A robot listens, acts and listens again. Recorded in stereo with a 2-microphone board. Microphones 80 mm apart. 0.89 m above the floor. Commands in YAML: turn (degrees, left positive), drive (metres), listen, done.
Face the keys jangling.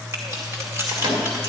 turn: -25
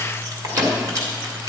turn: -40
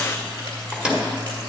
listen: true
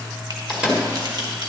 turn: -110
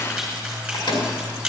done: "Found it: keys jangling, straight ahead, 2 to 4 m away."